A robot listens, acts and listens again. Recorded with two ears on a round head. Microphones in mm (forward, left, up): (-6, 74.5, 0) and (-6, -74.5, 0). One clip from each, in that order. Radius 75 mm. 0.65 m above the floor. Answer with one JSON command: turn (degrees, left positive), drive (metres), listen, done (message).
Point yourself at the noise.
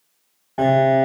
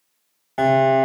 {"turn": -50}
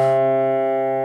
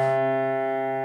{"done": "Facing the piano, 1 to 2 m away."}